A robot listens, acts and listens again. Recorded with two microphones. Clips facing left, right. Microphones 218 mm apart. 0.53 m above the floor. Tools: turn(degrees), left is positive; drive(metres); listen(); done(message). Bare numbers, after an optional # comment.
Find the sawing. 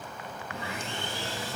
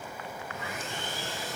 # The sawing: about 30° left or 150° left.
turn(30)
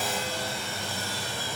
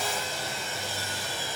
# So it is at 120° left.
turn(120)
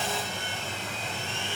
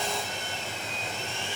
done("Found it: sawing, straight ahead.")